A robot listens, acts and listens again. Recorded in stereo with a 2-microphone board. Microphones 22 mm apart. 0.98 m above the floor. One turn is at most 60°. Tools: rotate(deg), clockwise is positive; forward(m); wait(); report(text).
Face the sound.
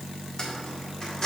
rotate(-35)
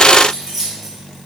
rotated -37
report("Found it: keys jangling, straight ahead.")